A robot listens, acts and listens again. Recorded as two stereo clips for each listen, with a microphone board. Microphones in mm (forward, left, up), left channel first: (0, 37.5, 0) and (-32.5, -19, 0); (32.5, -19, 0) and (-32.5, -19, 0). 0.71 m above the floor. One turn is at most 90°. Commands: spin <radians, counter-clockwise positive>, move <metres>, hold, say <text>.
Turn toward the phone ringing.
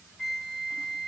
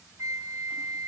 hold
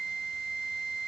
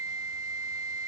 hold
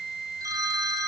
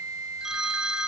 spin -1.57
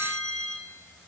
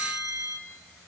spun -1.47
spin -0.26
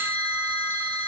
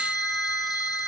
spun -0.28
hold
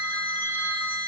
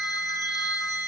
hold
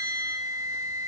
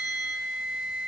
say Facing where the phone ringing came from. I can't hear it now.